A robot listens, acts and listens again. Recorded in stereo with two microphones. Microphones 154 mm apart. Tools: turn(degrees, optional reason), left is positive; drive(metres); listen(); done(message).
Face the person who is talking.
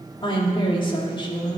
turn(degrees=35, reason="The woman speaking: about 35° left or 145° left.")
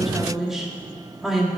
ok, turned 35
done("Facing the woman speaking.")